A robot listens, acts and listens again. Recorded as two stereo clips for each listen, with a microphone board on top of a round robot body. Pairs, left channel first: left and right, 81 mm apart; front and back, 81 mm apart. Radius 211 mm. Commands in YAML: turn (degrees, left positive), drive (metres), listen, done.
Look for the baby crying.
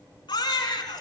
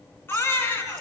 turn: 65
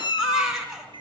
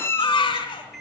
done: "Facing the baby crying, over 4 m away."